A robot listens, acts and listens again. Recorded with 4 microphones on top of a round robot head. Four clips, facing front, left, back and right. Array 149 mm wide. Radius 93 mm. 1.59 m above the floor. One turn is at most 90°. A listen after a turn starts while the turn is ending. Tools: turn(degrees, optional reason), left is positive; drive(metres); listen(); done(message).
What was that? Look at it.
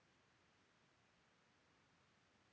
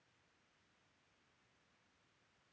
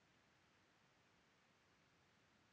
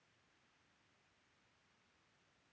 listen()
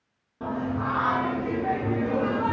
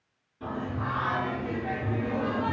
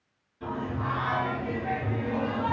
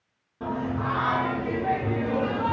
turn(degrees=-25, reason="The singing: 25° right.")
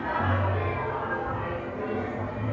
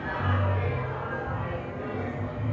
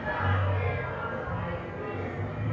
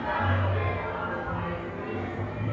done("Facing the singing, 2 to 4 m away.")